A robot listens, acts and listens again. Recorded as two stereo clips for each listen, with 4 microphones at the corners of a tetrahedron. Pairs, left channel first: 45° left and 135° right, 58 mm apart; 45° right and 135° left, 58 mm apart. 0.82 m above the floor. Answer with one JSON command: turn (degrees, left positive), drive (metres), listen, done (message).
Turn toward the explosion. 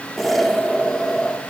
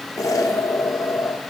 {"turn": -45}
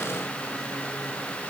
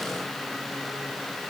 {"done": "I heard an explosion from this way, but can't make it out now."}